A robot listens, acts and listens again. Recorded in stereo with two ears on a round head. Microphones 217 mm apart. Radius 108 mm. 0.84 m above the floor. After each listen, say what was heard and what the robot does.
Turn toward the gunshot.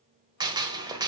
The gunshot: about 20° right or 160° right. Turn 20° right.
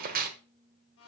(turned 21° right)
So it is at 140° right. Turn 140° right.
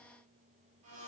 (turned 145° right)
Facing where the gunshot came from. I can't hear it now.